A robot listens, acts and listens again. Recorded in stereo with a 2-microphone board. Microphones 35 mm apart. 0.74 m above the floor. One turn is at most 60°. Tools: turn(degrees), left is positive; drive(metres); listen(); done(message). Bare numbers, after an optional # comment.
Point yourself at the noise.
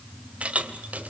# The keys jangling: about 50° right or 130° right.
turn(-50)
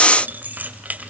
# So it is at 50° right.
turn(-50)
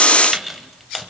done("Found it: keys jangling, straight ahead.")